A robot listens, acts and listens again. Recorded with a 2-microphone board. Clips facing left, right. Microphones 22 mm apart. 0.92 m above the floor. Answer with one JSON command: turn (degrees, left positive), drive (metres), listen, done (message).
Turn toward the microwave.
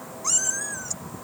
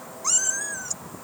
{"listen": true}
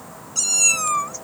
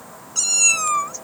{"listen": true}
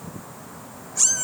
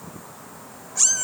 {"done": "I can't make out a microwave, only a cat meowing."}